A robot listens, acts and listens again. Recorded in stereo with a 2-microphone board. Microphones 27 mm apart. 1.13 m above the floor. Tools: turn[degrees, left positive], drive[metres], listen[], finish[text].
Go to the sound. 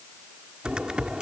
Thought: The typing on a keyboard: about 35° right or 145° right.
Action: turn[-35]
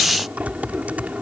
Thought: So it is at 110° right.
Action: turn[-110]
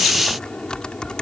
Thought: The typing on a keyboard is now 35° left.
Action: turn[35]
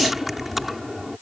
Action: drive[1.0]
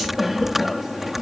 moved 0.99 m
Thought: The typing on a keyboard is now 10° right.
Action: turn[-10]
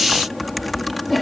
Action: drive[1.0]
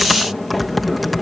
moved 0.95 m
Action: drive[1.0]
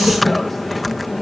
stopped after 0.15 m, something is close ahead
Action: finish[I am next to the typing on a keyboard.]